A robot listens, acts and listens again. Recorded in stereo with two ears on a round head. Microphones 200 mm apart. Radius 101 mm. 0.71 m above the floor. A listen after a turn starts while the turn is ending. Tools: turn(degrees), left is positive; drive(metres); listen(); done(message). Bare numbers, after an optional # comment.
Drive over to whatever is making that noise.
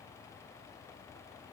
listen()
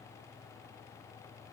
listen()
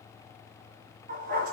# The dog barking: about 45° right or 135° right.
turn(-45)
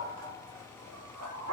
# So it is at 90° right.
turn(-90)
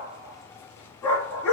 # The dog barking is now 10° left.
turn(10)
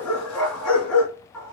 drive(1.0)
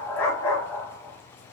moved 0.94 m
# The dog barking is now 10° left.
turn(10)
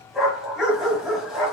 drive(1.0)
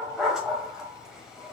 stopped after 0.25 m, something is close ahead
done("I am next to the dog barking.")